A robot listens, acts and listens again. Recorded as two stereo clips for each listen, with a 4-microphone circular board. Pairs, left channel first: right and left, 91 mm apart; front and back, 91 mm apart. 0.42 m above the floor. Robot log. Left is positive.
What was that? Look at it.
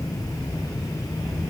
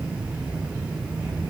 cmd idle
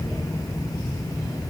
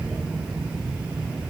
cmd idle
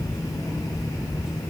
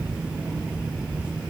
end: I can't make out anything.